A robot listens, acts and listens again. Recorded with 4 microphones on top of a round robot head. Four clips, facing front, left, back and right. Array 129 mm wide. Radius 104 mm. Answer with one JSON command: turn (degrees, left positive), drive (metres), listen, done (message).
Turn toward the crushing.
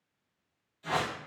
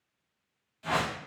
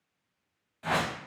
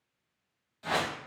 {"listen": true}
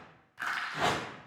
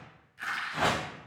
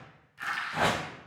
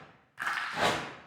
{"turn": -65}
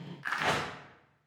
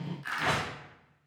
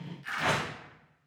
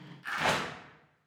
{"done": "Found it: crushing, straight ahead."}